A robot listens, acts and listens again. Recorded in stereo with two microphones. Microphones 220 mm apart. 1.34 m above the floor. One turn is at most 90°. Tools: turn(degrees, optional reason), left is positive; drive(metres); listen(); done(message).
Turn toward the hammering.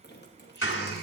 turn(degrees=65, reason="The hammering: about 65° left or 115° left.")
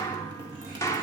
turn(degrees=15, reason="So it is at 15° left.")
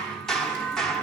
done("Facing the hammering.")